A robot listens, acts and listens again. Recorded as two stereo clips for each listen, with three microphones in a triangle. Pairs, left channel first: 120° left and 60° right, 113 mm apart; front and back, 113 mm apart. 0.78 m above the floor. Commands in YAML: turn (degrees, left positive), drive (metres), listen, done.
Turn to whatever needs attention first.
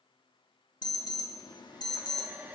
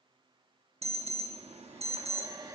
turn: 165
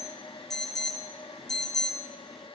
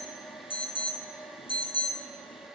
turn: 35
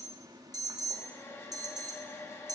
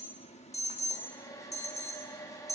done: "Facing the alarm, under 1 m away."